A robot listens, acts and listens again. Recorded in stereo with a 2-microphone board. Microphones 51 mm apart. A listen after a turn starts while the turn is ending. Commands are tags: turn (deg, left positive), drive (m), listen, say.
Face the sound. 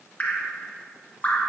<turn deg="25"/>
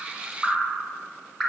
<say>Found it: dripping, straight ahead.</say>